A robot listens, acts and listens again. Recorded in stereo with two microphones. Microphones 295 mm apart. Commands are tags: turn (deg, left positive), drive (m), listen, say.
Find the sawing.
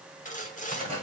<turn deg="25"/>
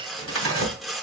<say>Found it: sawing, straight ahead.</say>